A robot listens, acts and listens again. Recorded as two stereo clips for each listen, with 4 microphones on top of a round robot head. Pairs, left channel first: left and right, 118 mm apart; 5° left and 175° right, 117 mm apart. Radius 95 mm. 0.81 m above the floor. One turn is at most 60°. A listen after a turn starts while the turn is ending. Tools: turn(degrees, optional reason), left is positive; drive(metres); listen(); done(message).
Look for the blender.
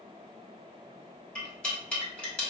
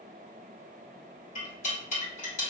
listen()
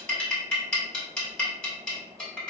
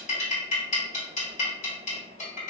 listen()
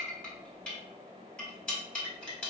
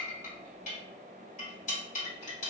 done("I can't make out a blender to turn to.")